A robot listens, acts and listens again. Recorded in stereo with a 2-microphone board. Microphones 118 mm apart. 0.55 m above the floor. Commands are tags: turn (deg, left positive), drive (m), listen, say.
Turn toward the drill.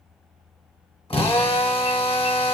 <turn deg="50"/>
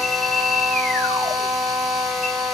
<say>Found it: a drill, straight ahead, under 1 m away.</say>